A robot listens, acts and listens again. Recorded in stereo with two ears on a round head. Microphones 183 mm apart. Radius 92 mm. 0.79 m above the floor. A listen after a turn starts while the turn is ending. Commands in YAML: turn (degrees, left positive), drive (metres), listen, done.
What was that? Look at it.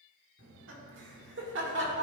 turn: -60
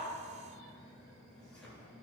done: "Facing the laughter."